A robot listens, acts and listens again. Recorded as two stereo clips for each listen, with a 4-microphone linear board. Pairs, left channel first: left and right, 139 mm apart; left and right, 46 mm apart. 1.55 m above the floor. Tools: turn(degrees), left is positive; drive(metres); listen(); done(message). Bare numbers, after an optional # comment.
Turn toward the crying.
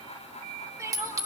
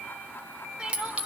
# The crying: about 20° right or 160° right.
turn(-20)
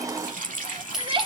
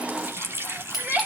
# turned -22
# So it is at 135° right.
turn(-135)
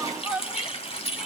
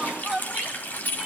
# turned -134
done("Facing the crying.")